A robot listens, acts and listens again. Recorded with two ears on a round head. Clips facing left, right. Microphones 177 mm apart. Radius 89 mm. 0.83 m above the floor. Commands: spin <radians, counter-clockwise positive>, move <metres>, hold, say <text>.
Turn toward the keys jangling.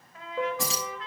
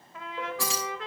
spin 0.35
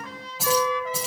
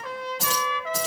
spin 0.52
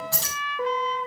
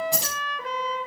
spin -0.26
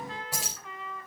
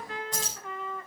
spin 0.17
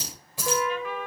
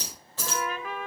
spin 0.17
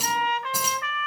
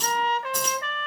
spin 0.17
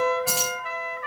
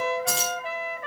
say Found it: keys jangling, straight ahead.